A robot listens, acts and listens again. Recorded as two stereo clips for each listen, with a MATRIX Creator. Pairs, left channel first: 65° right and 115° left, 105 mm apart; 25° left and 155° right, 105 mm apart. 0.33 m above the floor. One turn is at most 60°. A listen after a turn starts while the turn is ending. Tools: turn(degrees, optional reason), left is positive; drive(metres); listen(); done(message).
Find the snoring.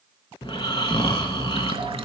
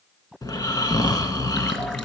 turn(degrees=-30, reason="The snoring: 30° right.")
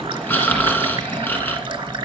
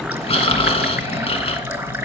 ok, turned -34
done("Facing the snoring, under 1 m away.")